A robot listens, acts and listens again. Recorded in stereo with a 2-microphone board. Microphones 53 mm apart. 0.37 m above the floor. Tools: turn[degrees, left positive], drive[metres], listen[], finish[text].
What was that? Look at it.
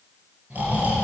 Thought: The snoring: about 30° right or 150° right.
Action: turn[-30]
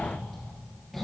Action: finish[Facing the snoring.]